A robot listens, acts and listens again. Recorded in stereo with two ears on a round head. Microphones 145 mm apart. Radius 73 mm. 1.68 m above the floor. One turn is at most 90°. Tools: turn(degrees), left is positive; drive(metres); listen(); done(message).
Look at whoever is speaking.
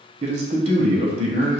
turn(degrees=-40)
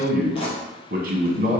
turn(degrees=-90)
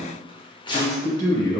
turn(degrees=25)
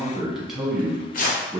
done("Found it: a man speaking, straight ahead.")